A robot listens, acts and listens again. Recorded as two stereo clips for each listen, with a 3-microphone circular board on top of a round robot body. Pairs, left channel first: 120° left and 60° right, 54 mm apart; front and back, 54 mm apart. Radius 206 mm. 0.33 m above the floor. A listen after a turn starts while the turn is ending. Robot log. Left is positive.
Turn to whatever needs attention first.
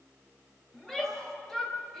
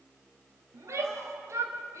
note: The shout: 155° right.
cmd yaw -155
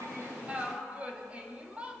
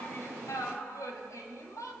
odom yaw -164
end: Facing the shout, 2 to 4 m away.